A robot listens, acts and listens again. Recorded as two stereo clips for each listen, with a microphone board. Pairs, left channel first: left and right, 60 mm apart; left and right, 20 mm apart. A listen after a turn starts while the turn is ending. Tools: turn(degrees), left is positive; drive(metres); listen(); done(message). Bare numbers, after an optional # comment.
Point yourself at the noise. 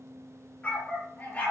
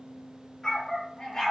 # The dog barking: about 25° left or 155° left.
turn(25)
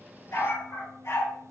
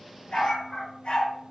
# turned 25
# So it is at 130° left.
turn(130)
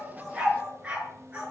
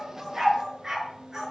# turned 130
# The dog barking is now 20° right.
turn(-20)
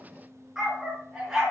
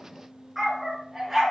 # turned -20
# The dog barking is now 10° right.
turn(-10)
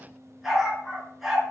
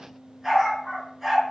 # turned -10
done("Found it: a dog barking, straight ahead, over 4 m away.")